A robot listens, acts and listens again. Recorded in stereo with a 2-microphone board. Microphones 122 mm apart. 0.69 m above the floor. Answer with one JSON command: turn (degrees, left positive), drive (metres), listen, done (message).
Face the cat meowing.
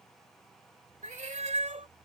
{"turn": -90}
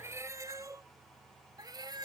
{"turn": -35}
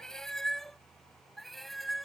{"done": "Facing the cat meowing."}